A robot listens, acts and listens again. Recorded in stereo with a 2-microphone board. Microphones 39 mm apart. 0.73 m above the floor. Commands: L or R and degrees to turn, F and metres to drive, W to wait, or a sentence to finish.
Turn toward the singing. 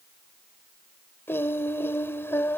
L75
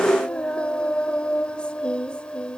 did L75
L30
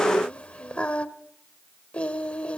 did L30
L35
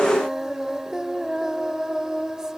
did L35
R15
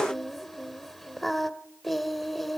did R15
Facing the singing.